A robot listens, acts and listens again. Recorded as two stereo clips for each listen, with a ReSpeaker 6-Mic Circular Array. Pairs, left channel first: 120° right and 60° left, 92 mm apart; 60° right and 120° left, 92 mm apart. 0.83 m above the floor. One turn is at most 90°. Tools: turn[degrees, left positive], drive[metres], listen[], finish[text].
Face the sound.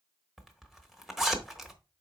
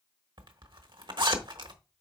Thought: The zipper: 145° left.
Action: turn[90]
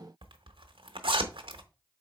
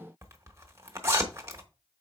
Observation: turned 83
Thought: The zipper is now 60° left.
Action: turn[60]
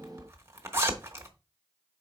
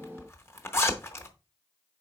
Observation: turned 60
Action: finish[Facing the zipper.]